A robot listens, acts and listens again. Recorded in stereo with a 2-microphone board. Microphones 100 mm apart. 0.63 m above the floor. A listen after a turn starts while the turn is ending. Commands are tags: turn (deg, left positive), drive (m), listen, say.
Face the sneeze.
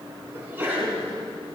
<turn deg="-20"/>
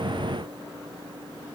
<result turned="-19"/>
<listen/>
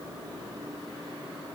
<say>I heard a sneeze, but can't make it out now. It was about 5° right or 140° right.</say>